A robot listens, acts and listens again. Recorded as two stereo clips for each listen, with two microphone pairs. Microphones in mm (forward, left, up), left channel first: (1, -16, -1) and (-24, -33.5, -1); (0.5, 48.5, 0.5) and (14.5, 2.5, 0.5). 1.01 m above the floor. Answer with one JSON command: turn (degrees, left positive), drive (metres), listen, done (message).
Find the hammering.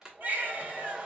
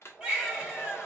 {"listen": true}
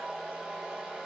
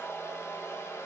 {"listen": true}
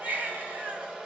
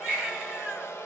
{"done": "I can't make out hammering, only a baby crying and a hair dryer."}